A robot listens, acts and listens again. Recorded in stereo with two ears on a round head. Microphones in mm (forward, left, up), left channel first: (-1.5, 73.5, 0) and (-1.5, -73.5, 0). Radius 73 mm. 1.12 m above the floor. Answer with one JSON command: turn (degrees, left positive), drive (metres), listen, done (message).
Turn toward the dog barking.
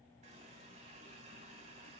{"listen": true}
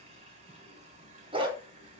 {"turn": -30}
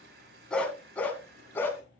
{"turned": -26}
{"turn": 15}
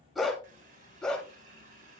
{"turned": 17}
{"done": "Facing the dog barking, 2 to 4 m away."}